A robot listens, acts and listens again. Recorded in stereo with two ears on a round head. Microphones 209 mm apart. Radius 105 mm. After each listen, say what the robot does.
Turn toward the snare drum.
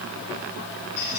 Keep listening.
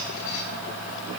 Keep listening.
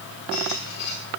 I can't make out a snare drum to turn to.